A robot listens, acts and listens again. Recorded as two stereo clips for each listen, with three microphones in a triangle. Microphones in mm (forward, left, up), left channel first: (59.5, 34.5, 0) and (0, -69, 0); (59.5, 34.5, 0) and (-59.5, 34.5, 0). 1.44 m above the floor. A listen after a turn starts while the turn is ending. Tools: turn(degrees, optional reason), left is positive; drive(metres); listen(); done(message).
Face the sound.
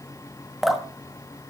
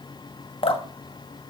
turn(degrees=-30, reason="The dripping: 30° right.")
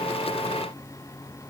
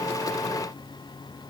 listen()
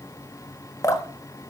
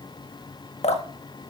done("Facing the dripping.")